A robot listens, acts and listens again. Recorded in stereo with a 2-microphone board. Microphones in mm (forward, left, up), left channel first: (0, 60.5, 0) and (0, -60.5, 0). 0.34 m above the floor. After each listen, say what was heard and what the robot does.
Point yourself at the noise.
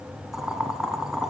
Turn 30° right.
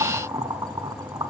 So it is at 145° right. Turn 145° right.
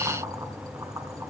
Keep listening.
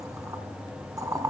The boiling is now 30° right. Turn 30° right.
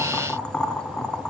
Found it: boiling, straight ahead, under 1 m away.